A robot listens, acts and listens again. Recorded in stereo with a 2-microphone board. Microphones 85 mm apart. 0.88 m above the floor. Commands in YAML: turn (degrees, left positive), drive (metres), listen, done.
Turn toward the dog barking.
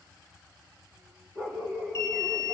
turn: -35
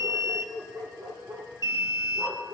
turn: -105
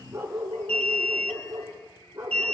turn: -35
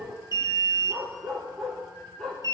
turn: 10
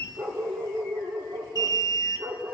done: "Facing the dog barking."